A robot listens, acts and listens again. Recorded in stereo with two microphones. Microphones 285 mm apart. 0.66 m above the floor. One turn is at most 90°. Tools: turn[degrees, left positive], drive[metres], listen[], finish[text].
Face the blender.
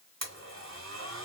Thought: The blender: about 65° right or 115° right.
Action: turn[-65]
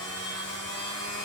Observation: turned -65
Thought: So it is at 55° right.
Action: turn[-55]
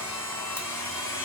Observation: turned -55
Thought: The blender is now 10° left.
Action: turn[10]
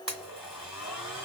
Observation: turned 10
Action: finish[Found it: a blender, straight ahead.]